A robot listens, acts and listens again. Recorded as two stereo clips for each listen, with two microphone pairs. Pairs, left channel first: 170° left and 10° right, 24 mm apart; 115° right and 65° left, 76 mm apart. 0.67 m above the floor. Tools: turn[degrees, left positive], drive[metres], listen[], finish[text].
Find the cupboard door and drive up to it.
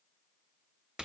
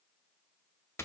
Action: listen[]
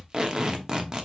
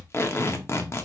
Action: listen[]
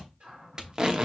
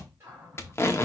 Thought: The cupboard door: 10° left.
Action: turn[10]
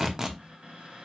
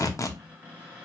Action: drive[1.0]
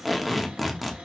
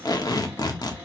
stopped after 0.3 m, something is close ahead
Action: listen[]
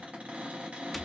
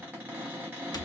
Action: finish[Something is in my way. I am facing the cupboard door but have not reached it.]